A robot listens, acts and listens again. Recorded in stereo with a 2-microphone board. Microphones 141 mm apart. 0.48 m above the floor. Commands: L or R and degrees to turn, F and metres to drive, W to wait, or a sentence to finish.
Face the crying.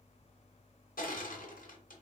W
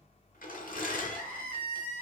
L30
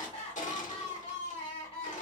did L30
L135
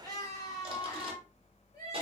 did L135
L25
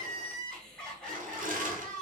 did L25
Facing the crying.